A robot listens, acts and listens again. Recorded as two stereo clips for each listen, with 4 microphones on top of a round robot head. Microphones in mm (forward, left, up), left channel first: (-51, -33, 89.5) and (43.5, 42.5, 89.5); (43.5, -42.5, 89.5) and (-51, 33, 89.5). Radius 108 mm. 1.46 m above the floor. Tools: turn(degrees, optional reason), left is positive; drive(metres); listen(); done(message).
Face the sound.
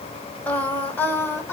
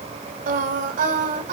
turn(degrees=145, reason="The singing: 145° left.")
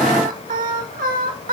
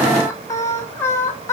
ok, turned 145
turn(degrees=30, reason="The singing is now 30° left.")
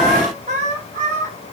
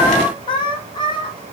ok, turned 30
turn(degrees=15, reason="The singing is now 15° left.")
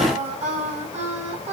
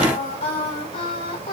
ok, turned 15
turn(degrees=10, reason="The singing is now 10° left.")
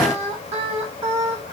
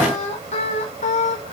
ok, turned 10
done("Facing the singing.")